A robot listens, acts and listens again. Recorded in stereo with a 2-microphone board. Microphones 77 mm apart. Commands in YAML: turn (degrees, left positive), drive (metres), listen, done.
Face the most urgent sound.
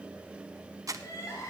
turn: 45
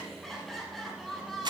done: "Found it: crying, straight ahead, over 4 m away."